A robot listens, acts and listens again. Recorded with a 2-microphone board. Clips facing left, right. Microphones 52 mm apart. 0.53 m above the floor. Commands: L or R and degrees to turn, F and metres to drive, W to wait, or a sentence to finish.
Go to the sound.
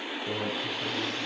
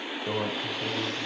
R40
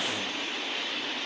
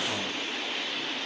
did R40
W
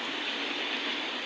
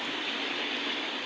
W
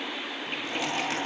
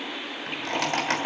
R100
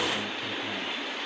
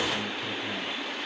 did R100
W
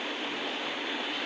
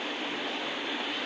W
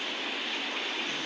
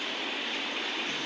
Facing where the microwave came from. I can't hear it now. I did not reach it.